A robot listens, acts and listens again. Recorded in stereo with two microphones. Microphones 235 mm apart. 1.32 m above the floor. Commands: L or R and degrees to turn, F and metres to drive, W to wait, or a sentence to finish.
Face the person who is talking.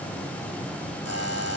W
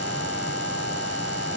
W
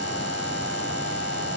I can't make out anyone speaking, only a buzzer.